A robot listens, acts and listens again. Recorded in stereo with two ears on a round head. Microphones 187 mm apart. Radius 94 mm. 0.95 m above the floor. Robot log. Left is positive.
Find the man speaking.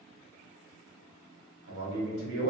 cmd yaw -90
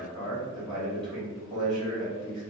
end: Found it: a man speaking, straight ahead.